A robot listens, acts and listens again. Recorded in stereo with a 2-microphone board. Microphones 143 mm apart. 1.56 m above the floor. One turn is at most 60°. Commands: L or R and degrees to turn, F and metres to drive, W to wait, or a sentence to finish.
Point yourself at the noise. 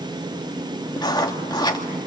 L30
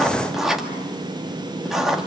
Facing the writing, 2 to 4 m away.